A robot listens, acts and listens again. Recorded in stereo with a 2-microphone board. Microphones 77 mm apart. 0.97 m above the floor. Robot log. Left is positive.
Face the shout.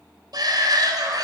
note: The shout: about 60° right or 120° right.
cmd yaw -60
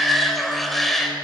end: Facing the shout.